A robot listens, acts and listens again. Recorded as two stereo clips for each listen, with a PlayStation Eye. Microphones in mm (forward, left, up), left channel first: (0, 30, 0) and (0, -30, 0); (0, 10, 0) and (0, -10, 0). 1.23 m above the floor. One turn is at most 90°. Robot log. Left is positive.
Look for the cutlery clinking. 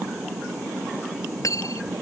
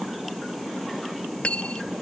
note: The cutlery clinking: about 65° left or 115° left.
cmd yaw +65
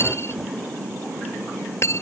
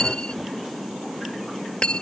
note: So it is at 45° left.
cmd yaw +45
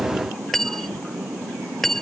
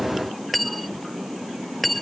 end: Found it: cutlery clinking, straight ahead.